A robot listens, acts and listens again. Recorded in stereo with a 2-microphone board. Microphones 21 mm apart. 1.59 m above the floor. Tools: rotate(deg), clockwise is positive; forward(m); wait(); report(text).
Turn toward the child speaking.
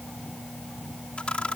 wait()
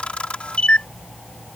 wait()
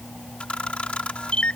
report("I can't make out a child speaking, only a camera shutter.")